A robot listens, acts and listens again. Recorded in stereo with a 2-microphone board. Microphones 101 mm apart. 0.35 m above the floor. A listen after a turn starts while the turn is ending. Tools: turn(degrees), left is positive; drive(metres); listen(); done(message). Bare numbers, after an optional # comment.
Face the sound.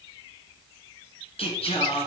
turn(90)
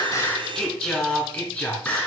# So it is at 15° left.
turn(15)
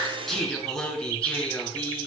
# The singing is now 15° left.
turn(15)
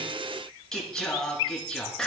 done("Found it: singing, straight ahead, 2 to 4 m away.")